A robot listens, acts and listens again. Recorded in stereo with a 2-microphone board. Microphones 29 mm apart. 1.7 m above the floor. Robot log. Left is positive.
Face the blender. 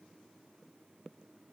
cmd idle
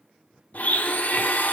note: The blender: about 65° left or 115° left.
cmd yaw +65
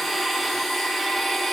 end: Found it: a blender, straight ahead.